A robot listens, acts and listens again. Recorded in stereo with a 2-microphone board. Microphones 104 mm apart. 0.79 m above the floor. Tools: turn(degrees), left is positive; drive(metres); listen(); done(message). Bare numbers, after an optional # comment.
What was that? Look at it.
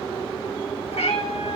turn(90)
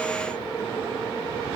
listen()
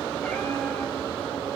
listen()
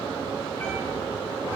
done("Facing where the cat meowing came from. I can't hear it now.")